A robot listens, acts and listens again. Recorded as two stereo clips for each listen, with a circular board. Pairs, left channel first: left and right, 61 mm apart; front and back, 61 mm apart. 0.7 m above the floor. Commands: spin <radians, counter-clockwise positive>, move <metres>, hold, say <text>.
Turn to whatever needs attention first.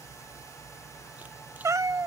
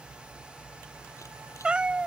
hold
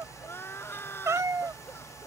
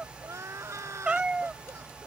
spin 2.53
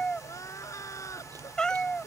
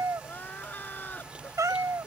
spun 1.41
spin 1.05
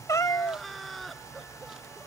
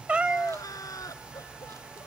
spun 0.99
say Facing the crying.